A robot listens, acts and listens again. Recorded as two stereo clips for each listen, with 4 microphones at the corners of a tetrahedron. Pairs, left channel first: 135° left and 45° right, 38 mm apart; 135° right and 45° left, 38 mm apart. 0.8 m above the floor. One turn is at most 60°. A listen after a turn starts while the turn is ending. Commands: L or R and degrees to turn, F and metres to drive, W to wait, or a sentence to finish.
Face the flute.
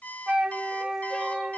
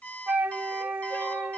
L15
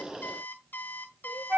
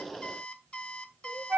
Found it: a flute, straight ahead.